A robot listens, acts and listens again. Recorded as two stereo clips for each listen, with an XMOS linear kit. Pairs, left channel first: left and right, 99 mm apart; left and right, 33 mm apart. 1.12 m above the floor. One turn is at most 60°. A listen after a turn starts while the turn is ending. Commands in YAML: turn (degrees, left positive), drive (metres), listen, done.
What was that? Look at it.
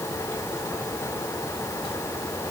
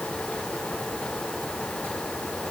listen: true
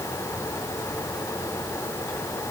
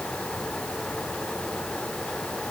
listen: true
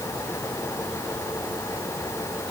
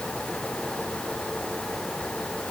done: "I can't make out anything."